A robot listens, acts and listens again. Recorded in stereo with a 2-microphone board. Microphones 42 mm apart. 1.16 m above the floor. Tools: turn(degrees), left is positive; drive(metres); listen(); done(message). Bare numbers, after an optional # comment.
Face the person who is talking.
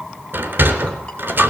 listen()
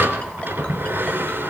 listen()
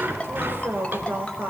# The woman speaking: about 65° right or 115° right.
turn(-65)
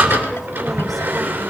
listen()
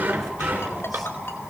listen()
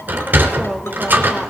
done("Found it: a woman speaking, straight ahead.")